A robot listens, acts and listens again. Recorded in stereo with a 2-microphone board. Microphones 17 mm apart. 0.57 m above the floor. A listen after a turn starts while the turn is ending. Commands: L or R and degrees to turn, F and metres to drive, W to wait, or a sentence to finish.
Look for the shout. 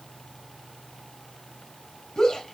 L55
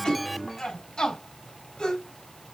L65
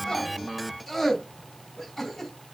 Facing the shout, over 4 m away.